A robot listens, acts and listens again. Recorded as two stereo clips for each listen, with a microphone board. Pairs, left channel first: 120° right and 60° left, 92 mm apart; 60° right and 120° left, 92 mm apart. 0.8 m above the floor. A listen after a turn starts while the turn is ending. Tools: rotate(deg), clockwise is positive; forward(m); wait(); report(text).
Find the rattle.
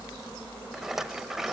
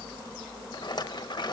rotate(25)
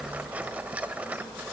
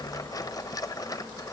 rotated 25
rotate(15)
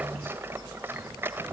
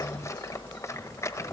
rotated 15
report("Found it: a rattle, straight ahead.")